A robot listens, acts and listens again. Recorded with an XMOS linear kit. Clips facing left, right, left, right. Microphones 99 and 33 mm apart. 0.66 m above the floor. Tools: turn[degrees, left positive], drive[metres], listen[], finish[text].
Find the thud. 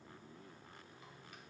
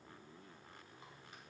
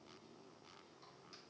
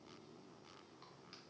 Action: listen[]
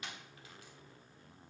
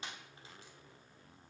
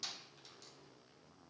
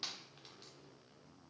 Action: listen[]
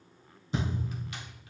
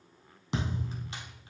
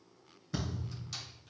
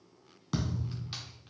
Action: turn[-90]
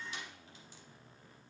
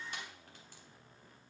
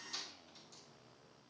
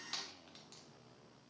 Action: finish[Facing where the thud came from. I can't hear it now.]